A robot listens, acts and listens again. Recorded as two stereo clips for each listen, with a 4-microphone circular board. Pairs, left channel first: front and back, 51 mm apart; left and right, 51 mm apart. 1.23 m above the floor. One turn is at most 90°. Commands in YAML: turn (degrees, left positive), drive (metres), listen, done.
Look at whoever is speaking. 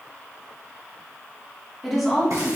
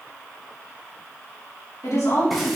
turn: 90
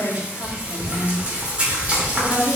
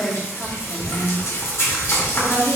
turn: 30
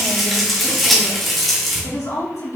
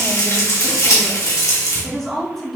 done: "Facing the woman speaking, 2 to 4 m away."